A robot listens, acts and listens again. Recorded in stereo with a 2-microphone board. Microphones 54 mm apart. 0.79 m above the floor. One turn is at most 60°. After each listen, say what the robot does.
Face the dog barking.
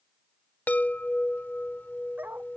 Turn 35° right.
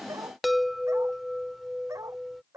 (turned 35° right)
Turn 60° right.
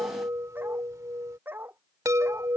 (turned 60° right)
Turn 40° right.
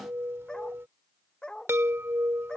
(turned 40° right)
Turn 15° left.
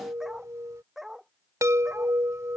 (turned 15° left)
Found it: a dog barking, straight ahead.